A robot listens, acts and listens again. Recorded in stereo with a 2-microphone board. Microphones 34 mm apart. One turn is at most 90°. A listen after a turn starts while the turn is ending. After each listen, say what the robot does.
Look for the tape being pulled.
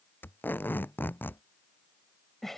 Turn 90° left.
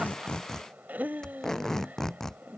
Turn 15° left.
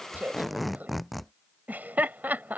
Facing the tape being pulled.